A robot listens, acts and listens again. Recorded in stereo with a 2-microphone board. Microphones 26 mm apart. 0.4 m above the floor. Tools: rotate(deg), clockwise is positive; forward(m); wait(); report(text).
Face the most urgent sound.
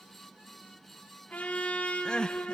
rotate(-30)
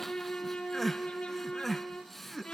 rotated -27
report("Found it: crying, straight ahead.")